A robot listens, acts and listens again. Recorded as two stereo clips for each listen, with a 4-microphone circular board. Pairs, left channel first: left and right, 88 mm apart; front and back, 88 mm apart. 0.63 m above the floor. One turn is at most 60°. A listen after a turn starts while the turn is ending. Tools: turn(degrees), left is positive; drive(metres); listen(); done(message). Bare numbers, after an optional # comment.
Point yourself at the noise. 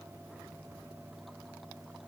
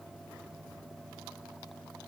listen()
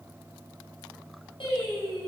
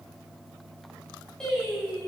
# The singing: 80° left.
turn(60)
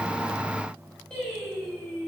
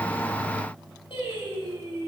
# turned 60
done("Found it: singing, straight ahead.")